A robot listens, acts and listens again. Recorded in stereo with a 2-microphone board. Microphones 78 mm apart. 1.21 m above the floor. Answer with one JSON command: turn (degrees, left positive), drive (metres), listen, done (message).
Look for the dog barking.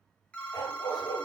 {"turn": 60}
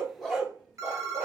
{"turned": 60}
{"turn": -20}
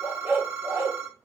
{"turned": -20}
{"turn": -35}
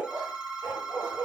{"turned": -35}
{"turn": -40}
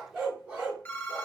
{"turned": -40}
{"turn": -10}
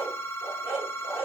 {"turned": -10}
{"done": "Found it: a dog barking, straight ahead."}